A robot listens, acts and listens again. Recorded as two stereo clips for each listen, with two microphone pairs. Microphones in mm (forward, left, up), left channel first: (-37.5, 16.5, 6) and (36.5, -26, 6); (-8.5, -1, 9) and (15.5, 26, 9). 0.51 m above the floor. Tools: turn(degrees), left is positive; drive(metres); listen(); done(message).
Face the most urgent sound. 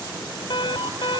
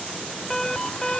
turn(degrees=150)
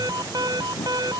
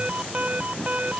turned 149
done("Facing the alarm.")